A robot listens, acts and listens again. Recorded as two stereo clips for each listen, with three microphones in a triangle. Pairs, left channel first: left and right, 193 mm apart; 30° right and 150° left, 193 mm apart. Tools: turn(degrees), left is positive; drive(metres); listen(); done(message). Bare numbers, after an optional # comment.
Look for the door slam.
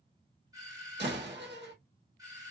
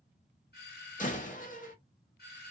# The door slam: 75° right.
turn(-75)
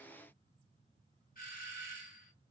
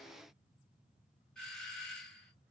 done("I heard a door slam from this way, but can't make it out now.")